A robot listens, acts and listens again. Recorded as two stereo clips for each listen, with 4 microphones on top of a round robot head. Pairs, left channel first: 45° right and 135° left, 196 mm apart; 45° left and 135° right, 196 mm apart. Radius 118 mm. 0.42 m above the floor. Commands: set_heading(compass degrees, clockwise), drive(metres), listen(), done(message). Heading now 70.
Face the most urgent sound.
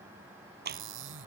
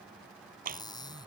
listen()
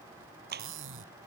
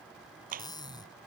listen()
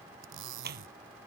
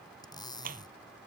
done("I can't make out anything urgent to turn to.")